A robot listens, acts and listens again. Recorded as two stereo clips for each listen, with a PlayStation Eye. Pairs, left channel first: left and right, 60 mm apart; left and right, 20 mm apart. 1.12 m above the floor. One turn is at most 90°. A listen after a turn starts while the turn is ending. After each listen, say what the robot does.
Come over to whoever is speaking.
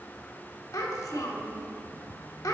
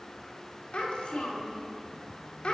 Turn 90° left.
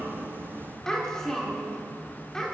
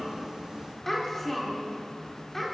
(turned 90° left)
Turn 15° left.
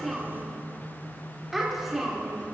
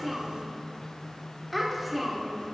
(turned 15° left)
Drive 1.0 m forward.
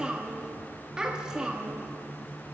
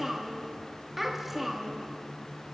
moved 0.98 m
Turn 10° right.
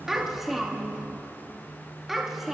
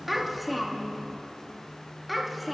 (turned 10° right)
Drive 1.0 m forward.
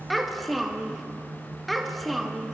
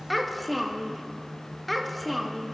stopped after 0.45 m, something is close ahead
Arrived at the child speaking, straight ahead.